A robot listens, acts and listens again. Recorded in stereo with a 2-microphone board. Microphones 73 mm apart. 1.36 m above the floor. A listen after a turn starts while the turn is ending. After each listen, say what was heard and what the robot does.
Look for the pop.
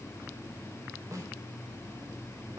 Keep listening.
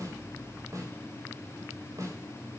Keep listening.
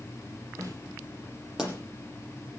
Turn 30° right.
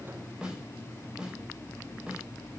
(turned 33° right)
Keep listening.
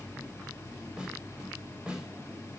I heard a pop, but can't make it out now. It was about 25° left or 140° right.